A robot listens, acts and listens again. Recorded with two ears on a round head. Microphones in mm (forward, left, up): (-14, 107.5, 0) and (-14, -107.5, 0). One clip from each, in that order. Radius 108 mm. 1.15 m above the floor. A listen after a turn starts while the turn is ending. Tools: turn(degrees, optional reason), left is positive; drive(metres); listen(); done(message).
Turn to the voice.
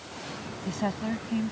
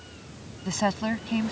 turn(degrees=-40, reason="The woman speaking: about 40° right or 140° right.")
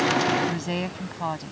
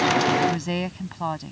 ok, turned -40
done("Facing the woman speaking.")